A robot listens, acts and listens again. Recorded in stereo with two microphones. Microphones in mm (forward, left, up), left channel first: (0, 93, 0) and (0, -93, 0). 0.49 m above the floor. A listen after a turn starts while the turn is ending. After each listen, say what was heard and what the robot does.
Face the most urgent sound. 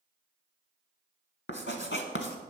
Keep listening.
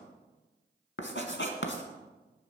Keep listening.
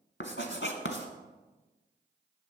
I can't make out anything urgent, only writing.